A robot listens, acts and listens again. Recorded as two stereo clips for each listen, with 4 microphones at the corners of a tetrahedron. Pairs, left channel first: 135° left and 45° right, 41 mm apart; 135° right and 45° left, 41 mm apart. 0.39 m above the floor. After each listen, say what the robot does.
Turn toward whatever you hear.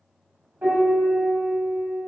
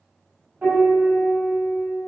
Facing the piano.